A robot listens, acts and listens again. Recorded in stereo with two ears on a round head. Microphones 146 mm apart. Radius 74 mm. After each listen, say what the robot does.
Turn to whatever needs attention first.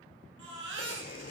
Turn 90° right.
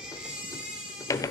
Facing the baby crying.